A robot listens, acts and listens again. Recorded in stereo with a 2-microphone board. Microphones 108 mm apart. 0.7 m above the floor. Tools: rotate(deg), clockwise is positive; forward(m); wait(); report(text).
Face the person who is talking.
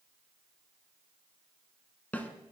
wait()
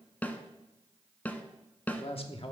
rotate(-60)
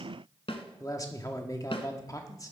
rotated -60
rotate(-35)
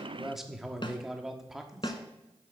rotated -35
report("Facing the man speaking.")